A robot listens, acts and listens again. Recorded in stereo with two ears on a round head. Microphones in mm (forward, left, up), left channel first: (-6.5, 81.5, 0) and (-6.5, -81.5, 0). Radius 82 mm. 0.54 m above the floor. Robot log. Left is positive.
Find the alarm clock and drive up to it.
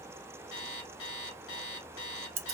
note: The alarm clock: about 70° left or 110° left.
cmd yaw +70
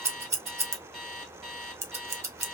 cmd fwd 1.0
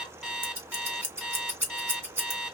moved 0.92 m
cmd fwd 1.0
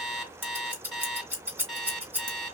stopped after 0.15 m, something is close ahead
end: I am next to the alarm clock.